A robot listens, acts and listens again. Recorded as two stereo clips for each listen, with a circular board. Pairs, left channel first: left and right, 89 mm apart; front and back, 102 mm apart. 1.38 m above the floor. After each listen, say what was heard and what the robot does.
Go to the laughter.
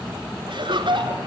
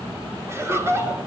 The laughter: 115° right. Turn 115° right.
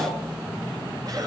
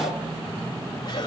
Keep listening.
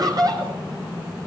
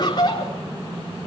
The laughter is now 45° right. Turn 45° right.
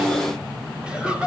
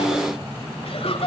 The laughter is now 10° right. Turn 10° right.
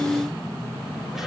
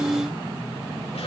Keep listening.
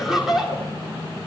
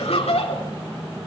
Drive 1.0 m forward.
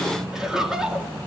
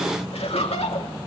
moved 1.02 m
Drive 1.0 m forward.
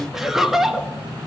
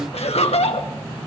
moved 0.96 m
Drive 1.0 m forward.
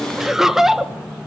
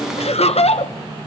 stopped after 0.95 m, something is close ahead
I am next to the laughter.